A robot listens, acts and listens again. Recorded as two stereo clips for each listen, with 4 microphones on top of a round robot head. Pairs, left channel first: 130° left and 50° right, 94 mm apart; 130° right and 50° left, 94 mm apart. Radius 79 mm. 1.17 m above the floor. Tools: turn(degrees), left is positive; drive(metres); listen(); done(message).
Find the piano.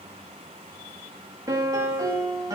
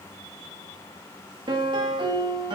done("Facing the piano.")